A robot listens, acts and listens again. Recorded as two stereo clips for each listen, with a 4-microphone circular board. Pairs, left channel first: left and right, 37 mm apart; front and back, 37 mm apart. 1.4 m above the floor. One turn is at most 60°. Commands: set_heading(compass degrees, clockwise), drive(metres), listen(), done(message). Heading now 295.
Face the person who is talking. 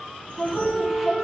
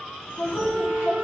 done("Found it: a woman speaking, straight ahead, 2 to 4 m away.")